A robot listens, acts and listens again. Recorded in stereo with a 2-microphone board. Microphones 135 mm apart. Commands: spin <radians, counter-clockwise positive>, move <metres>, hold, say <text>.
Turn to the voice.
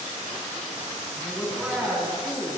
spin -0.52
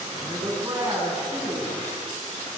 spin -2.62
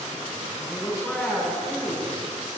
say Facing the woman speaking.